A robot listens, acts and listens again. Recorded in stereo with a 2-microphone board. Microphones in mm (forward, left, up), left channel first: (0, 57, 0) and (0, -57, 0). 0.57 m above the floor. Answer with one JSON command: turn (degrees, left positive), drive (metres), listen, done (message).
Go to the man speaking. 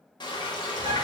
{"listen": true}
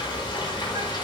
{"listen": true}
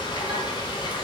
{"done": "I can't make out a man speaking, only a bird and frying."}